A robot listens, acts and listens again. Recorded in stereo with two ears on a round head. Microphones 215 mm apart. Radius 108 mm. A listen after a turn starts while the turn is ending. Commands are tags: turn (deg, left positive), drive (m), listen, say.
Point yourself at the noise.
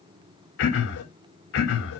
<turn deg="65"/>
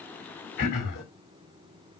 <turn deg="45"/>
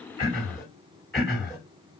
<say>Facing the throat clearing.</say>